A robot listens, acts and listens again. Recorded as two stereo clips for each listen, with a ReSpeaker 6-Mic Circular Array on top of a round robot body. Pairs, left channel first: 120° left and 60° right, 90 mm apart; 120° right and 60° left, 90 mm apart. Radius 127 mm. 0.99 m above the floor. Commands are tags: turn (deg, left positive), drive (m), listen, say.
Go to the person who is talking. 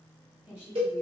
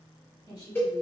<turn deg="-140"/>
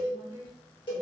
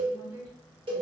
<drive m="1.0"/>
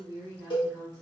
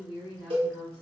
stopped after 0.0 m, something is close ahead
<say>Something is in my way. I am facing the woman speaking but have not reached it.</say>